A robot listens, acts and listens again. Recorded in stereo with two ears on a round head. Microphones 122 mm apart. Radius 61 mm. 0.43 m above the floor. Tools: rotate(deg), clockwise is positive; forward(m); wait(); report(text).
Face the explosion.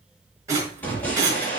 rotate(-30)
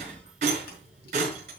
wait()
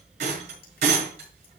report("I heard an explosion, but can't make it out now. It was about 15° right or 135° left.")